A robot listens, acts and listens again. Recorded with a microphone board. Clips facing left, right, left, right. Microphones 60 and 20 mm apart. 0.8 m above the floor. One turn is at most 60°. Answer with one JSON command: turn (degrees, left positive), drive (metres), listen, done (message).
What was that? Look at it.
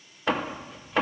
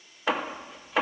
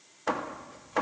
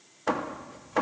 {"turn": 30}
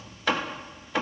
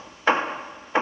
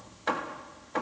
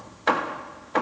{"turn": -35}
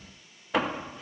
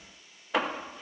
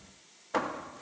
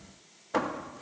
{"done": "Facing the hammering."}